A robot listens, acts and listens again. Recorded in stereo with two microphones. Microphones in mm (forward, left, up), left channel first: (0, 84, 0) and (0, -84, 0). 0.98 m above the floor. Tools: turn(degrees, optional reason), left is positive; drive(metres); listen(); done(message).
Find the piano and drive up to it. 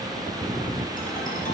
listen()
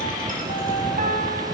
turn(degrees=-55, reason="The piano: about 55° right or 125° right.")
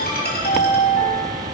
listen()
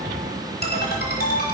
listen()
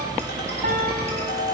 done("I heard a piano, but can't make it out now. It was about straight ahead or 70° right. I did not reach it.")